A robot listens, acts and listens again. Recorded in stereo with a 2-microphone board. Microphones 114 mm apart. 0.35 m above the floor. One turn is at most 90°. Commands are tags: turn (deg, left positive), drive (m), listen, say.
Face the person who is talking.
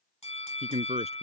<turn deg="-70"/>
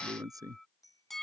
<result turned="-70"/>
<turn deg="-30"/>
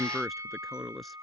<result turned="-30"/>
<say>Found it: a man speaking, straight ahead.</say>